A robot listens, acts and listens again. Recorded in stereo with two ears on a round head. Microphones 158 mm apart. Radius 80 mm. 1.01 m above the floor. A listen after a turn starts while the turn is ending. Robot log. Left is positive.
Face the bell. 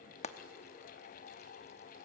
cmd idle
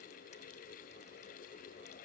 cmd idle
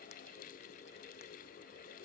end: I can't make out a bell to turn to.